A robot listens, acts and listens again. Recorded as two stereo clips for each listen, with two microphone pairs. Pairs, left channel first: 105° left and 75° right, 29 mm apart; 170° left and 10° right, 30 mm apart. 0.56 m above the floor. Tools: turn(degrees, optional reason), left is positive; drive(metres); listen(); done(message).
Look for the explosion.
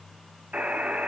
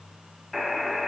listen()
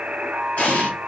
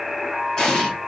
turn(degrees=110, reason="The explosion: 110° left.")
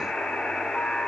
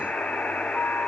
done("Facing where the explosion came from. I can't hear it now.")